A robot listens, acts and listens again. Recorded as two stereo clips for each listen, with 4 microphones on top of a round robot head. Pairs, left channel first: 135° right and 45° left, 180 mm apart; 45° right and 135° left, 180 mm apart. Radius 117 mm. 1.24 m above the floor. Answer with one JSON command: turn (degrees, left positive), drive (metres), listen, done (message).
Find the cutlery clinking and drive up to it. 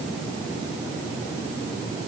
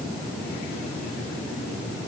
{"listen": true}
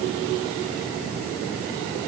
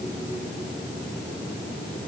{"listen": true}
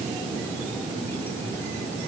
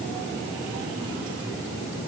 {"done": "I can't make out cutlery clinking to turn to."}